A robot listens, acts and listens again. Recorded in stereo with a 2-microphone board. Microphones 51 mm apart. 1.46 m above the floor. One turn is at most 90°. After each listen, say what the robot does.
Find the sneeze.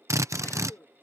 Turn 60° left.
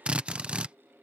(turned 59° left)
Keep listening.
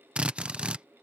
I heard a sneeze, but can't make it out now. It was about straight ahead or 60° left.